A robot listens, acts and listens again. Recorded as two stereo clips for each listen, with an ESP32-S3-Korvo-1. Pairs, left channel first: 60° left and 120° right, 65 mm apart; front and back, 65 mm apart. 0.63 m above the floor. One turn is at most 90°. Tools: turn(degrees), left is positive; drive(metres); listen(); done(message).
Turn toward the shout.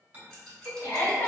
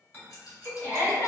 turn(degrees=40)
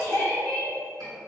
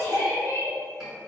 done("Found it: a shout, straight ahead, 1 to 2 m away.")